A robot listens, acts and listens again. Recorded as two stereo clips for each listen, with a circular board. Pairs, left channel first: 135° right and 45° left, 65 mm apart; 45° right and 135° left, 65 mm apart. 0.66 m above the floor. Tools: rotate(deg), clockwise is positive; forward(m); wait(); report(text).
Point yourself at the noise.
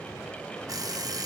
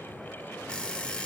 rotate(-30)
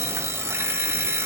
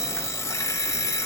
report("Facing the alarm clock.")